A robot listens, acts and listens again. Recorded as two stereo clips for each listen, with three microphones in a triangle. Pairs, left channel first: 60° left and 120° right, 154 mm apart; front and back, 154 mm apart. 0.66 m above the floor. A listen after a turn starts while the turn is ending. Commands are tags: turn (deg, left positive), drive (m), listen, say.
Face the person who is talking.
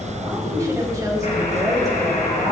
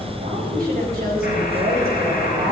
<turn deg="175"/>
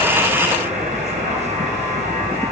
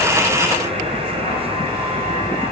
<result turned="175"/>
<listen/>
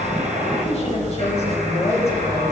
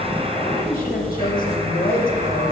<turn deg="15"/>
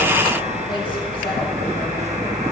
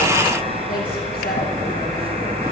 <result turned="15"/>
<listen/>
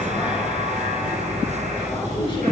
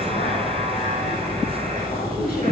<listen/>
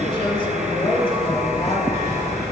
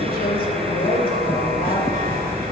<say>Facing the woman speaking, 2 to 4 m away.</say>